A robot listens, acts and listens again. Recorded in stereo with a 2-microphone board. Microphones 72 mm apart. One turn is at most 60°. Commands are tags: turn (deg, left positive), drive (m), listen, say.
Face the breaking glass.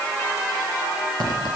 <listen/>
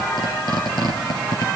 <listen/>
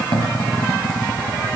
<say>I can't make out breaking glass to turn to.</say>